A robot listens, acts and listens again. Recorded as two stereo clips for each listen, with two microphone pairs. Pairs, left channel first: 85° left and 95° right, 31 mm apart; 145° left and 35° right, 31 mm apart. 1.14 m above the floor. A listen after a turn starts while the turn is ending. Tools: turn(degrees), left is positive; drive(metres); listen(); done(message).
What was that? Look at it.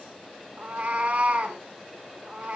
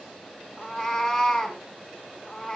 turn(degrees=-145)
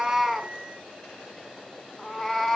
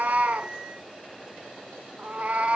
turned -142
done("Found it: a cat meowing, straight ahead, 2 to 4 m away.")